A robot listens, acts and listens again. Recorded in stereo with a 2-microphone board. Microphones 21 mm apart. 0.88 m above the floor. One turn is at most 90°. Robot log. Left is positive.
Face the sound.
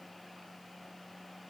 cmd idle
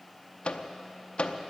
note: The microwave: about 55° left or 125° left.
cmd yaw +55
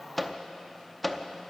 end: Facing the microwave.